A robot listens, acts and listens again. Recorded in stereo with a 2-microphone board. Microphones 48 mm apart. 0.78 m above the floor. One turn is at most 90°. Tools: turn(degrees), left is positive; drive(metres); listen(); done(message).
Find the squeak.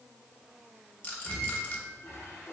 turn(degrees=90)
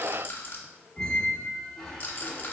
turn(degrees=10)
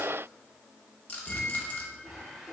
done("Facing the squeak, 1 to 2 m away.")